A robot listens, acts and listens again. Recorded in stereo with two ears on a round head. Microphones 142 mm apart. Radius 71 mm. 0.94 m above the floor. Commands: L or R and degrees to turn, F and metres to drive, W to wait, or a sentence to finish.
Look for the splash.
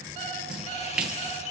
R30
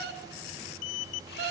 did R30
W
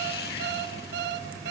I heard a splash, but can't make it out now. It was about 25° left or 145° right.